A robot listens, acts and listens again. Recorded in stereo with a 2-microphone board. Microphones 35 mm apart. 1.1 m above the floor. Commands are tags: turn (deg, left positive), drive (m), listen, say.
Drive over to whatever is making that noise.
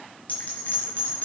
<turn deg="45"/>
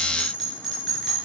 <drive m="1.0"/>
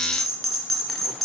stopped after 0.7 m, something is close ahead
<say>Something is in my way. I am facing the bell but have not reached it.</say>